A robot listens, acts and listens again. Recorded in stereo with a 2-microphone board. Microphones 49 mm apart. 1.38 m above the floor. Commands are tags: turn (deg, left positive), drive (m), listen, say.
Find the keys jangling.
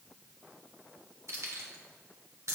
<turn deg="-75"/>
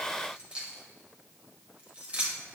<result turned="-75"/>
<turn deg="-25"/>
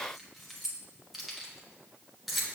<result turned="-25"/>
<say>Found it: keys jangling, straight ahead.</say>